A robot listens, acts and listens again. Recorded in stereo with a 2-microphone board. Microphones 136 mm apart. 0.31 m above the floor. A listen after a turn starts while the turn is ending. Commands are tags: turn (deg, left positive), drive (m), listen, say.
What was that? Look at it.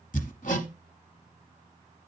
<turn deg="70"/>
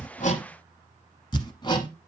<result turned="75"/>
<turn deg="35"/>
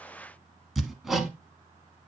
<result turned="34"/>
<say>Facing the hammering, 1 to 2 m away.</say>